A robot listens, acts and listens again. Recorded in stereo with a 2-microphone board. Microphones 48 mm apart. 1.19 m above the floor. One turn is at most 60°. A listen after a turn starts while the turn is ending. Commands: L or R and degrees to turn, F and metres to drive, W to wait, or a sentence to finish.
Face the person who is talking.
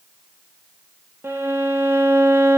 W
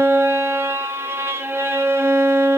W
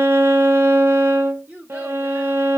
R30
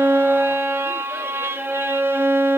W
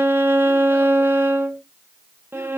W
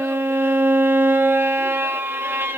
I heard a child speaking, but can't make it out now. It was about straight ahead or 120° right.